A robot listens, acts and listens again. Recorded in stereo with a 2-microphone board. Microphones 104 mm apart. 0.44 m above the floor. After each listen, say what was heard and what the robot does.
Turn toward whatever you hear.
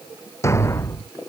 The thud: about 25° left or 155° left. Turn 25° left.
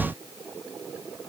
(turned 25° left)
Keep listening.
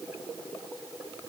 I heard a thud, but can't make it out now. It was about straight ahead or 130° left.